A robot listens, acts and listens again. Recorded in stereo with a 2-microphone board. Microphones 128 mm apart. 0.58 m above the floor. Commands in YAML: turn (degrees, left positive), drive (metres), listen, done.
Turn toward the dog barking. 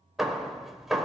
listen: true
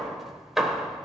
listen: true
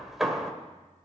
done: "I can't make out a dog barking, only hammering."